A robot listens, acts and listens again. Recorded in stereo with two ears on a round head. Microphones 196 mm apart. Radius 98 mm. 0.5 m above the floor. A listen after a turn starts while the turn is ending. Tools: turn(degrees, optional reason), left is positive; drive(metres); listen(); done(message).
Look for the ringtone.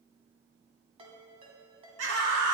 turn(degrees=-25, reason="The ringtone: about 25° right or 155° right.")
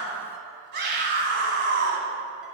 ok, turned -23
listen()
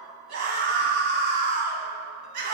listen()
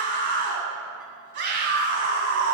done("I heard a ringtone, but can't make it out now. It was about 5° right or 130° right.")